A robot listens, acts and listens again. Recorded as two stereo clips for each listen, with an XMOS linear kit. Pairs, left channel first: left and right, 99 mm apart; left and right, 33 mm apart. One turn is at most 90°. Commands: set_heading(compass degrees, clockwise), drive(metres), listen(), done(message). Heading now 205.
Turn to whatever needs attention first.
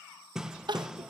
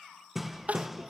set_heading(260)
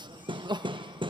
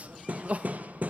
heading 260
set_heading(320)
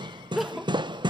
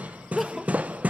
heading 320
done("Facing the crying.")